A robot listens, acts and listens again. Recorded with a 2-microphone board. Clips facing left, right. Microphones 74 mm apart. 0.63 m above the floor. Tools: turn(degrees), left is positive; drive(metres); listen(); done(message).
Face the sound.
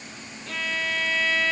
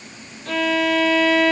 turn(degrees=-90)
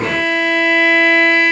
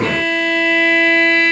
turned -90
turn(degrees=10)
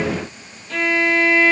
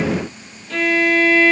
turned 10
done("Facing the violin, under 1 m away.")